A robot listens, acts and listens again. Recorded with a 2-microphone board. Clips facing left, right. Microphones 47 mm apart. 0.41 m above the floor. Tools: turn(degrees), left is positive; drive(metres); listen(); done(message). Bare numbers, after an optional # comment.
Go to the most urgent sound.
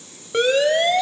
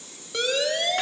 # The siren: about 35° left or 145° left.
turn(35)
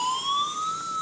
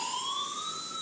# So it is at 100° left.
turn(100)
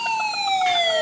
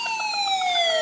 # The siren is now 10° left.
turn(10)
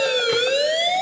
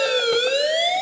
drive(1.0)
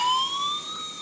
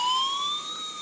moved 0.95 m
drive(1.0)
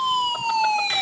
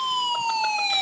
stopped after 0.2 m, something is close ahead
# The siren is now 10° left.
turn(10)
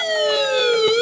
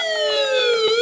done("Arrived at the siren, straight ahead.")